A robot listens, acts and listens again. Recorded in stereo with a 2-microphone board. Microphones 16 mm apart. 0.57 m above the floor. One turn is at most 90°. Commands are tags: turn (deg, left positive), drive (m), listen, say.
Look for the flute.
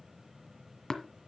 <listen/>
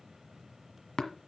<listen/>
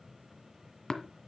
<say>I can't make out a flute to turn to.</say>